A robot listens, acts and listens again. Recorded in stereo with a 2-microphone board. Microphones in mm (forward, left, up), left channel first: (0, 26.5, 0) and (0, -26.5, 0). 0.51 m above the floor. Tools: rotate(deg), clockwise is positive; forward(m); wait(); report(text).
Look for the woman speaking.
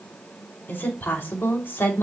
rotate(-50)
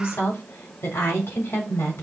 rotate(-55)
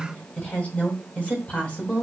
rotate(-25)
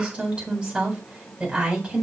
rotate(20)
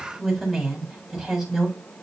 report("Facing the woman speaking.")